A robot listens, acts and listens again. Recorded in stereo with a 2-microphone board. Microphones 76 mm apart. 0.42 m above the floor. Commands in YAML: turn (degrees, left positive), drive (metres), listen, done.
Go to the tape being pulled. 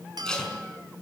turn: 30
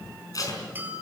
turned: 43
turn: 130
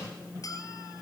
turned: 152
turn: -25
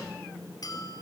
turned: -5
turn: -20
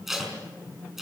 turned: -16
drive: 1.0
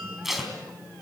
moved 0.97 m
drive: 1.0
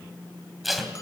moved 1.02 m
drive: 1.0
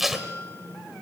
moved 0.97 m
drive: 1.0
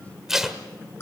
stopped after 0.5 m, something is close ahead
done: "Arrived at the tape being pulled, straight ahead."